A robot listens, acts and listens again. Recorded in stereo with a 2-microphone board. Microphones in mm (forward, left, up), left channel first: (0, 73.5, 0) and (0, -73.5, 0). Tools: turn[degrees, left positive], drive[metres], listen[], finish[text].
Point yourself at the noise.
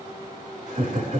Thought: The laughter: about 70° right or 110° right.
Action: turn[-70]
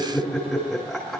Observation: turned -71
Action: finish[Facing the laughter, over 4 m away.]